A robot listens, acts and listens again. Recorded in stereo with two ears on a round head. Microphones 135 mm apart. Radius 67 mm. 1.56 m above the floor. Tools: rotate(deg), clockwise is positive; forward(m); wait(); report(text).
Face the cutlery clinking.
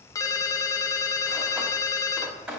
rotate(30)
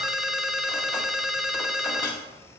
rotate(-20)
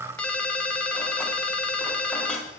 rotate(-10)
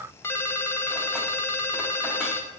wait()
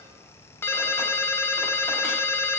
wait()
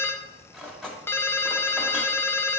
report("Found it: cutlery clinking, straight ahead, 2 to 4 m away.")